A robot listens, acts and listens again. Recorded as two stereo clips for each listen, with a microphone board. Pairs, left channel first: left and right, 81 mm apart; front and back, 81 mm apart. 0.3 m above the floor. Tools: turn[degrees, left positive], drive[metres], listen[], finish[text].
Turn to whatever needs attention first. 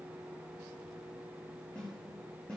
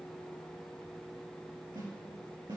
Action: listen[]
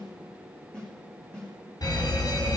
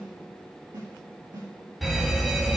Thought: The fire alarm: 90° left.
Action: turn[90]
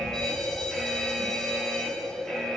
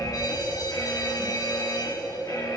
Action: finish[Facing the fire alarm, 2 to 4 m away.]